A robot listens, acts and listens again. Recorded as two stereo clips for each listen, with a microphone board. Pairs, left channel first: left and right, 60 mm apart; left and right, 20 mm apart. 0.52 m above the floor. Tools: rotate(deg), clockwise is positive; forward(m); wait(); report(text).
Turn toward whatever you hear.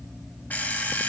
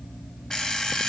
rotate(-30)
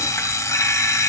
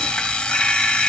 rotate(-120)
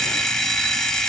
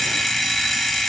report("Found it: an alarm clock, straight ahead, 1 to 2 m away.")